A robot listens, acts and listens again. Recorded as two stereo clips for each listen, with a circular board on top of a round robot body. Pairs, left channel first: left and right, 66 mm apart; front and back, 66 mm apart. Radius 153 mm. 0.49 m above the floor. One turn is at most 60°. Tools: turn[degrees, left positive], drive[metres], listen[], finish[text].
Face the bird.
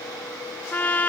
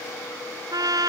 Action: listen[]
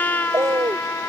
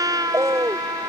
Thought: The bird: 135° right.
Action: turn[-60]
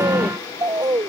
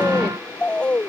Thought: The bird is now 70° right.
Action: turn[-60]
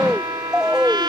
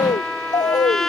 Thought: The bird is now 10° right.
Action: turn[-10]
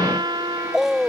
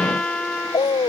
Action: finish[Facing the bird.]